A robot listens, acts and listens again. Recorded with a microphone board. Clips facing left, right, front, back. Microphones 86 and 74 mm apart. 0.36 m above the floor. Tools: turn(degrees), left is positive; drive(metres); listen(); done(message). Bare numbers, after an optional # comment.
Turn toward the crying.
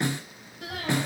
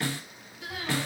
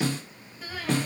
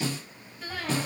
# The crying: 85° left.
turn(85)
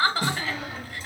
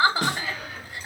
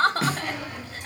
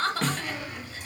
# The crying is now 20° right.
turn(-20)
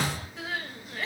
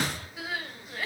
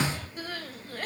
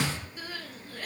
done("Facing the crying, under 1 m away.")